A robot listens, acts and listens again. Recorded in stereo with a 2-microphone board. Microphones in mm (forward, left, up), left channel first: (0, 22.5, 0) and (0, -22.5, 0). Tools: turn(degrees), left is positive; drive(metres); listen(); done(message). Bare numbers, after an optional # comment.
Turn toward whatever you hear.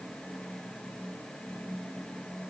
listen()
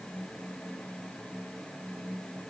listen()
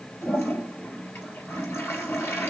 # The toilet flushing: about 65° left or 115° left.
turn(65)
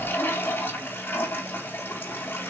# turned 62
# So it is at 50° left.
turn(50)
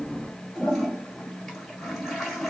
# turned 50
done("Found it: a toilet flushing, straight ahead.")